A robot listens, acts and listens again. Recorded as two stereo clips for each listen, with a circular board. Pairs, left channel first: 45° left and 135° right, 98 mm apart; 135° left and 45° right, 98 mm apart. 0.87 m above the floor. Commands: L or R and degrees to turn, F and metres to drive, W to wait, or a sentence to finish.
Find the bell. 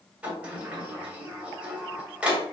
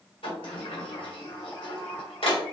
W
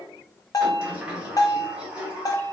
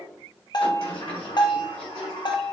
L95
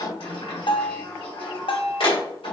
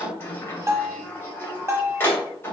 L15
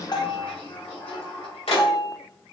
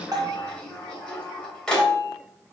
Found it: a bell, straight ahead, under 1 m away.